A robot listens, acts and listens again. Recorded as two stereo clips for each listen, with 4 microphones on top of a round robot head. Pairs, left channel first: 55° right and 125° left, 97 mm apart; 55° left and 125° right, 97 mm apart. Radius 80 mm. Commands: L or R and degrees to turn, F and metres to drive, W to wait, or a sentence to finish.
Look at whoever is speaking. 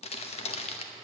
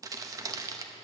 W
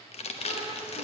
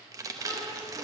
R15
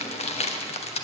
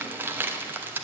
W
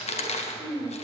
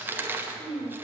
Found it: a child speaking, straight ahead.